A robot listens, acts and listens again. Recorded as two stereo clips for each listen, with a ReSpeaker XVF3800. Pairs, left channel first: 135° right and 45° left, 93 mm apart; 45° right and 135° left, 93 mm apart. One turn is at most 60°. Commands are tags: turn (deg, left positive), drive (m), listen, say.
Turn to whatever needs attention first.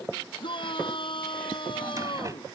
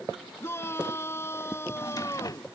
<turn deg="-60"/>
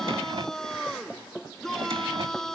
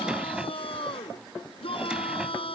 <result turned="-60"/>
<turn deg="-50"/>
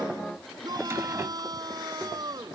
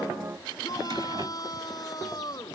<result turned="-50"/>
<say>Facing the shout.</say>